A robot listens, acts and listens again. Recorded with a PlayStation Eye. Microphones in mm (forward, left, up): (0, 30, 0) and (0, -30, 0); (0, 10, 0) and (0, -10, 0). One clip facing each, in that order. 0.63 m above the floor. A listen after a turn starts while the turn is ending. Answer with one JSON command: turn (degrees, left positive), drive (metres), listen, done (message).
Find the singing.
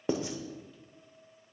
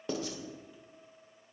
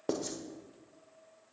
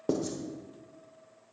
{"listen": true}
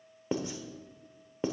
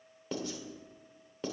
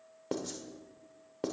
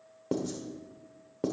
{"listen": true}
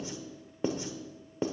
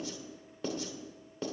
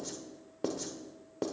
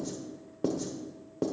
{"done": "I can't make out singing to turn to."}